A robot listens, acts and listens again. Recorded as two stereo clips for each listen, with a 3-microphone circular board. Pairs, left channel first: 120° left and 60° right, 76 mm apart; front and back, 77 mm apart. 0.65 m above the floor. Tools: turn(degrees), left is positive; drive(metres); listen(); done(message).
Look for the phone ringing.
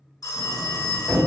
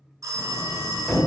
turn(degrees=145)
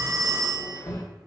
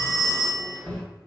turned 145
turn(degrees=-35)
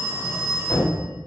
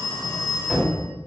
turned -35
turn(degrees=-15)
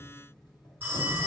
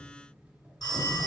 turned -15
done("Found it: a phone ringing, straight ahead.")